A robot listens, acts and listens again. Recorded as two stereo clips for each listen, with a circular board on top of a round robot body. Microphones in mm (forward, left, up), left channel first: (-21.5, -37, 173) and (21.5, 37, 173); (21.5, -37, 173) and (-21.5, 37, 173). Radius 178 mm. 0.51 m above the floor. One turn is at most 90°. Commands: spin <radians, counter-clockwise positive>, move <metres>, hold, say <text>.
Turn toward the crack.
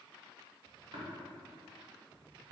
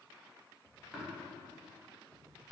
hold
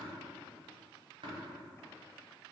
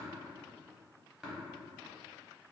hold
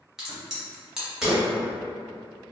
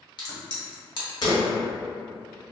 spin -0.44
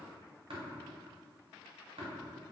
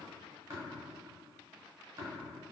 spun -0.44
say I heard a crack from this way, but can't make it out now.